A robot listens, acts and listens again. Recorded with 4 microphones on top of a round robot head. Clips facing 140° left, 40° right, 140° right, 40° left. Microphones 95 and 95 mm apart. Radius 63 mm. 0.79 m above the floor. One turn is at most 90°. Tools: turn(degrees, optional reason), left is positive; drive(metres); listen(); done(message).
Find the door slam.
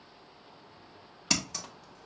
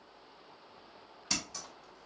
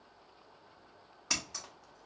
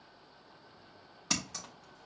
listen()
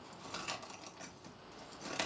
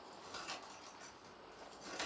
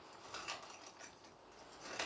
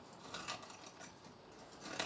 listen()
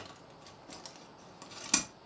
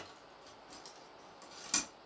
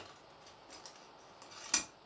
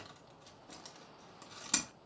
done("I can't make out a door slam, only scissors.")